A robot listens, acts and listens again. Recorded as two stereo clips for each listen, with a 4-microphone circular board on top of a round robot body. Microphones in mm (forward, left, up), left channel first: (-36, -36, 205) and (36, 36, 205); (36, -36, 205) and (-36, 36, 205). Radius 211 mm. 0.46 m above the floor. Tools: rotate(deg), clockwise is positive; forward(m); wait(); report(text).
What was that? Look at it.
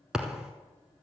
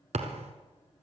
rotate(-130)
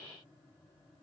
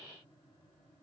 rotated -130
report("Facing where the thud came from. I can't hear it now.")